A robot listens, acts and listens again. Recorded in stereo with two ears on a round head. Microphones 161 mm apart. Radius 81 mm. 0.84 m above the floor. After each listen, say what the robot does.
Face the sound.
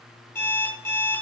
Turn 30° left.
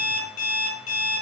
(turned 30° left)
Turn 135° left.
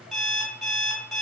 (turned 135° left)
Found it: an alarm clock, straight ahead.